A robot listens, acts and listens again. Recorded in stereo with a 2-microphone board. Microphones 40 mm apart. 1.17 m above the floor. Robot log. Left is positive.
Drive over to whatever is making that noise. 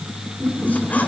note: The squeak: about 45° left or 135° left.
cmd yaw +45
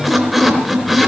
cmd fwd 1.0
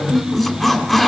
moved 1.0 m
note: The squeak is now 10° left.
cmd yaw +10
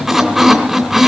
cmd fwd 1.0
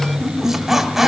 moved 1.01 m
cmd fwd 1.0
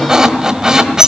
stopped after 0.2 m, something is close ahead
note: The squeak is now 15° right.
cmd yaw -15
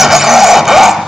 end: I am next to the squeak.